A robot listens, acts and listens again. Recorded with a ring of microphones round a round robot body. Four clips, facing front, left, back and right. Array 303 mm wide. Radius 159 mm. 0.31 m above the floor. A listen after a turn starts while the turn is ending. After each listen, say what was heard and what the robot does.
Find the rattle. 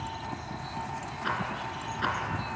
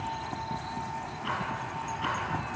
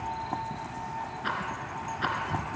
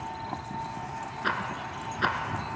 The rattle: 90° right. Turn 90° right.
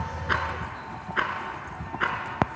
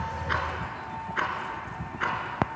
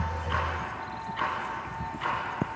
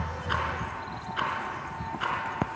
The rattle is now 15° left. Turn 15° left.
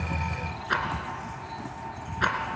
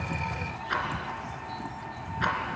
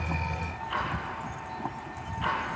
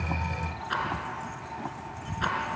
Found it: a rattle, straight ahead.